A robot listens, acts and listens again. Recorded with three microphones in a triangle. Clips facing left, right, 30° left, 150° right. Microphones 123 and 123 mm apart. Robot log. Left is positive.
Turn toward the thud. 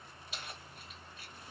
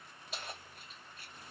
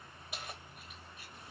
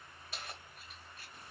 cmd idle
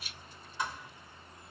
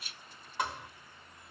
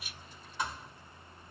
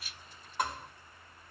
note: The thud: 115° right.
cmd yaw -115
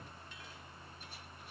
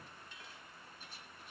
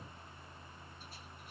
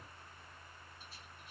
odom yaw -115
end: Facing where the thud came from. I can't hear it now.